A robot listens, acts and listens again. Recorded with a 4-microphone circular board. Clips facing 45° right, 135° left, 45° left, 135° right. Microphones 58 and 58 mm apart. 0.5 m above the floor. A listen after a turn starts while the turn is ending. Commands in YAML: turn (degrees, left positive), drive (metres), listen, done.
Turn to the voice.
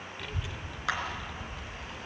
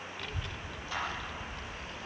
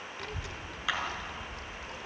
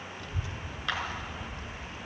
turn: 40
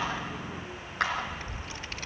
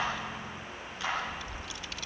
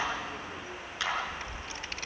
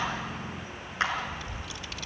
done: "Facing the child speaking, under 1 m away."